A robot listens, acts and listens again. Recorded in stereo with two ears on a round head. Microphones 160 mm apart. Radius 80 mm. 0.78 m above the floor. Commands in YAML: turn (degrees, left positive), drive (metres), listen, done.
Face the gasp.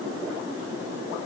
listen: true
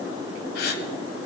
turn: 55
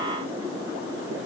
listen: true
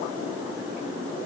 done: "I heard a gasp, but can't make it out now. It was about straight ahead or 70° left."